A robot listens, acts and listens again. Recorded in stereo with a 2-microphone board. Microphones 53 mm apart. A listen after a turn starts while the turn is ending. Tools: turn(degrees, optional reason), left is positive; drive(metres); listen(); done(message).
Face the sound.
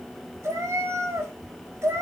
turn(degrees=-75, reason="The cat meowing: about 75° right or 105° right.")
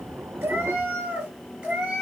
turn(degrees=-20, reason="So it is at 20° right.")
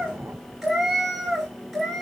done("Found it: a cat meowing, straight ahead.")